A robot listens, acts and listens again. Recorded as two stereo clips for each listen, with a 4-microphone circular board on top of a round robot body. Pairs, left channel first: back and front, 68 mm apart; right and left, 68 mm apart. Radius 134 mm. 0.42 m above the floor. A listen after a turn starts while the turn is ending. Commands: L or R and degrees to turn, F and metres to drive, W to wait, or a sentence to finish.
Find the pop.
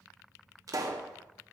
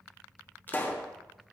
R30
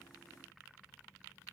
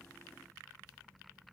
I heard a pop from this way, but can't make it out now.